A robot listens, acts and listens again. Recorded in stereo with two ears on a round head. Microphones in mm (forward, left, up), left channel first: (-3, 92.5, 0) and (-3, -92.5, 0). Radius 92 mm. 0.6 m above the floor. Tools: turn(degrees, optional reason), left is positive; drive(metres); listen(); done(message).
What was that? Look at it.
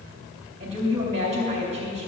turn(degrees=-35, reason="The woman speaking: about 35° right or 145° right.")
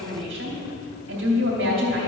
turn(degrees=-105, reason="So it is at 105° right.")
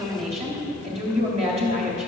turn(degrees=-35, reason="The woman speaking is now 35° right.")
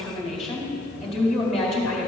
done("Facing the woman speaking.")